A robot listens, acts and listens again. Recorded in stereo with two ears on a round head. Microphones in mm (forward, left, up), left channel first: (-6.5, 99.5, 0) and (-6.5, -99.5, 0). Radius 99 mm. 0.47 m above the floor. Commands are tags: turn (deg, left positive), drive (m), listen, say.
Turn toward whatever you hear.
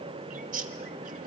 <turn deg="-40"/>
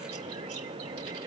<listen/>
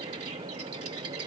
<turn deg="-100"/>
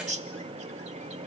<turn deg="-35"/>
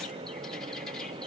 <listen/>
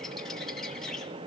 <say>Facing the bird, 1 to 2 m away.</say>